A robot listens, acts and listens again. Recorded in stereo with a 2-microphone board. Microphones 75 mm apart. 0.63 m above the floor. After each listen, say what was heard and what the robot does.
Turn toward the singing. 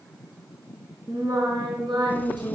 The singing: about 75° right or 105° right. Turn 75° right.
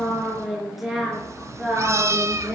Found it: singing, straight ahead, over 4 m away.